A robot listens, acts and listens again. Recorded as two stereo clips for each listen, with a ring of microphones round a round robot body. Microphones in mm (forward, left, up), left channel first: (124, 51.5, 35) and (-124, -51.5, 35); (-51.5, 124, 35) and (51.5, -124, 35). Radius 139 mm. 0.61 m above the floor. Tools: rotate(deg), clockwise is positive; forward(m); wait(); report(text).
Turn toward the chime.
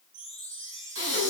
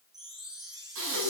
rotate(145)
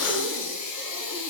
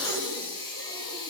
wait()
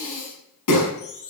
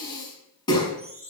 report("Found it: a chime, straight ahead, over 4 m away.")